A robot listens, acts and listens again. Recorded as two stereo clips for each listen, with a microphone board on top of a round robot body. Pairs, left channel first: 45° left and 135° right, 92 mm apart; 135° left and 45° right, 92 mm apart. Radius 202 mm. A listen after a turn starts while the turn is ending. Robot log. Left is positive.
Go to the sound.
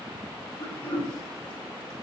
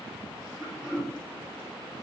note: The throat clearing: 40° left.
cmd yaw +40
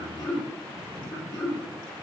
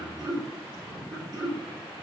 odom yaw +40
cmd fwd 1.0
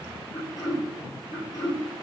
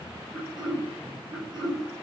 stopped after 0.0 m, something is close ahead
end: Something is in my way. I am facing the throat clearing but have not reached it.